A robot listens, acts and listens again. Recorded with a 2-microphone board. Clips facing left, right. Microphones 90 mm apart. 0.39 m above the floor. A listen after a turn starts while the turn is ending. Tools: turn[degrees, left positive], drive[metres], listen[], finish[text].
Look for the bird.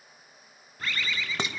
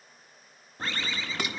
Thought: The bird: about 30° right or 150° right.
Action: turn[-30]
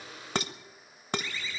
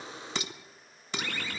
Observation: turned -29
Thought: So it is at 120° right.
Action: turn[-120]
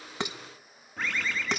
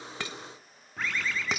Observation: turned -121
Action: finish[Found it: a bird, straight ahead.]